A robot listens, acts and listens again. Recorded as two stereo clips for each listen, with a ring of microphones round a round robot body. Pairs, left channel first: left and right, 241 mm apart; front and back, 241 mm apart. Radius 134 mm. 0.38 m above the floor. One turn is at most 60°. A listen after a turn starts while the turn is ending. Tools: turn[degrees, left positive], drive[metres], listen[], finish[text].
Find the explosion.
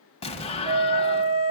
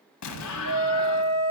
Thought: The explosion: 25° left.
Action: turn[25]
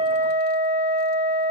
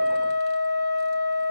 Action: finish[Facing where the explosion came from. I can't hear it now.]